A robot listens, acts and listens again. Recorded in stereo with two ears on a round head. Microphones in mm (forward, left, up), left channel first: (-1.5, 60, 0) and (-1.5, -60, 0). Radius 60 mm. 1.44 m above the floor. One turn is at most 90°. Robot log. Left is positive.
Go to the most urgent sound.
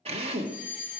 cmd yaw -30
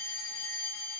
note: So it is at 20° left.
cmd yaw +20
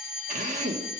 cmd fwd 1.0
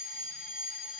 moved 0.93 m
cmd fwd 1.0
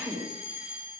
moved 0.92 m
cmd fwd 1.0
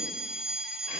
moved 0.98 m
note: The fire alarm is now 10° right.
cmd yaw -10
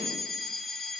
cmd fwd 1.0
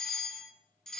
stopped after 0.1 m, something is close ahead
end: Arrived at the fire alarm, straight ahead.